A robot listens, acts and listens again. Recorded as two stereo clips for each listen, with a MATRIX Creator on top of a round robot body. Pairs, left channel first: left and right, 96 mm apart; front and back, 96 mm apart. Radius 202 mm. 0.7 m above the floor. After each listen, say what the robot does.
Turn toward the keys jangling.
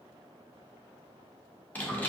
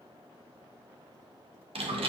Keep listening.
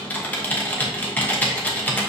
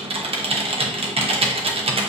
Keep listening.
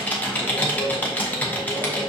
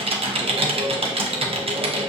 I can't make out keys jangling to turn to.